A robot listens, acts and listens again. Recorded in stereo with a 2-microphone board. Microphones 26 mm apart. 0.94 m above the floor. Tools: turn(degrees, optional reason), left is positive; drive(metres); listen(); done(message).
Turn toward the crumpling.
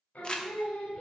turn(degrees=35, reason="The crumpling: about 35° left or 145° left.")
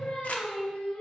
listen()
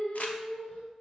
listen()
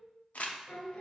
turn(degrees=115, reason="So it is at 115° left.")
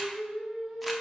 listen()
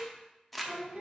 done("Facing the crumpling, under 1 m away.")